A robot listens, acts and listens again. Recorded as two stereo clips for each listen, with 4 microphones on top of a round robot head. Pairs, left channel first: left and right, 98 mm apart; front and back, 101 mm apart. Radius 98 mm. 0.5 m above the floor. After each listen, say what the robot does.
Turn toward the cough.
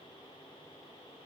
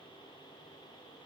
Keep listening.
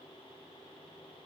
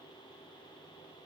Keep listening.
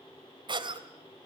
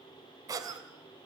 Turn 125° right.
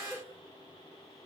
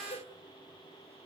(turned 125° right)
Keep listening.
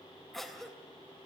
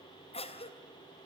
Facing the cough, 2 to 4 m away.